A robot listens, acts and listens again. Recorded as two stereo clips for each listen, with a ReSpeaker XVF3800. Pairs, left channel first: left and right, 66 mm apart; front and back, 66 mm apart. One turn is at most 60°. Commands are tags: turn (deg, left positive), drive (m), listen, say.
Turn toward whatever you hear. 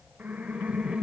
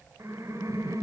<turn deg="-60"/>
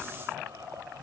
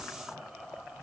<turn deg="-60"/>
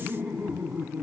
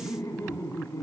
<turn deg="-40"/>
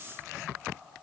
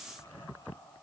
<listen/>
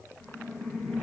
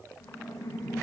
<say>Facing the laughter.</say>